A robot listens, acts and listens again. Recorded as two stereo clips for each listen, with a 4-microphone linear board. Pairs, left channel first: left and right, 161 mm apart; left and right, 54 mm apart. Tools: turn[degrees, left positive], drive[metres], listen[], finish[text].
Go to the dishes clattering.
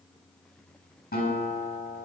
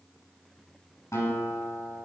Action: listen[]
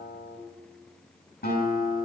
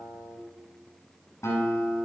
Action: listen[]
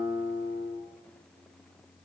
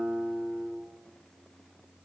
Action: finish[I can't make out dishes clattering, only a guitar.]